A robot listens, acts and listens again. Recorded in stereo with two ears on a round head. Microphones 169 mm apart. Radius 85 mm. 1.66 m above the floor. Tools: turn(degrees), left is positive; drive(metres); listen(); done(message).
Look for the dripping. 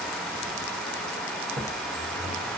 listen()
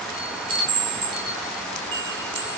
listen()
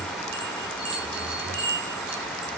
done("I can't make out dripping to turn to.")